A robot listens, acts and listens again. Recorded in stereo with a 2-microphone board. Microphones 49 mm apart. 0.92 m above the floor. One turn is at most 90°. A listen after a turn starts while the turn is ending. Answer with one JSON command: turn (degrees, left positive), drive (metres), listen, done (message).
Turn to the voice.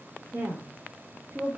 {"turn": -70}
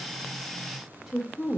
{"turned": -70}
{"done": "Facing the woman speaking."}